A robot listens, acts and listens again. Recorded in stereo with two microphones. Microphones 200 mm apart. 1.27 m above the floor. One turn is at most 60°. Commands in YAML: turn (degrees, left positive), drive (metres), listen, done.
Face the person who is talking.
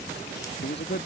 turn: 55
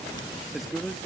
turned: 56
done: "Found it: a man speaking, straight ahead."